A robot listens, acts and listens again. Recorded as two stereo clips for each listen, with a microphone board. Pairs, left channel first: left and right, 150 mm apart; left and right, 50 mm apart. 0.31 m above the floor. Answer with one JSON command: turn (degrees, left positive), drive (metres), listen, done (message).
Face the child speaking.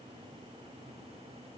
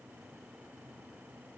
{"listen": true}
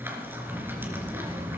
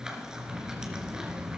{"turn": -25}
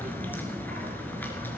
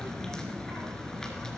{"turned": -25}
{"turn": -125}
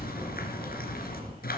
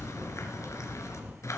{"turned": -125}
{"turn": -25}
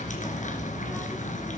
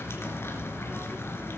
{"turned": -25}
{"done": "Found it: a child speaking, straight ahead."}